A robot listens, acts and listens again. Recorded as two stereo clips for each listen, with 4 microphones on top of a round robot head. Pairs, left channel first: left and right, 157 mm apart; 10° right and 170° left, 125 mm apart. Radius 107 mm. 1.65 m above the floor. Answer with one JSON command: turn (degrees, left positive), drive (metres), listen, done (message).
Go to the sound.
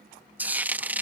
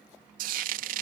{"turn": -170}
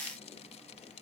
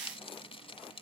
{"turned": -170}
{"turn": 30}
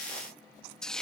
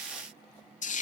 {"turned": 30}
{"drive": 1.0}
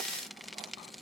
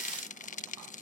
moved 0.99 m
{"drive": 1.0}
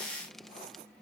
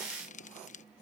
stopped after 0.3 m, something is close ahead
{"listen": true}
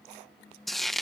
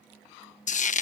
{"done": "Arrived at the frying, straight ahead."}